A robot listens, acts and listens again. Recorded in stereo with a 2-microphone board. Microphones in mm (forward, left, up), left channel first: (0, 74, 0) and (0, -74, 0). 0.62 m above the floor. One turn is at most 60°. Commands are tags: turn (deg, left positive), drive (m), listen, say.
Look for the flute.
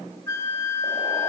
<turn deg="20"/>
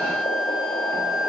<say>Facing the flute, 1 to 2 m away.</say>